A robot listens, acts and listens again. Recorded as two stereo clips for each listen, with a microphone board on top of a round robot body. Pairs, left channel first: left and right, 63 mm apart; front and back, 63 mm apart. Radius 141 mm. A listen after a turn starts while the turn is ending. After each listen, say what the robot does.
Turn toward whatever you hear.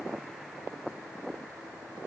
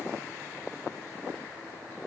Keep listening.
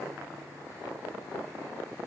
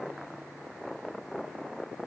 Keep listening.
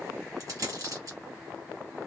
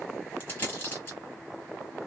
Turn 60° right.
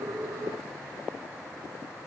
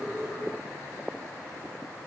I heard a dropped coin from this way, but can't make it out now.